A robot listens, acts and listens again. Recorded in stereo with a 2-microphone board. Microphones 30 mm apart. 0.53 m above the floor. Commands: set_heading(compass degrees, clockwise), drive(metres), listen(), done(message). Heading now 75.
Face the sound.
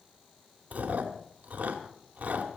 set_heading(135)
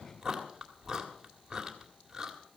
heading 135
set_heading(150)
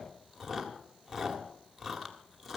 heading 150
done("Facing the chewing, 2 to 4 m away.")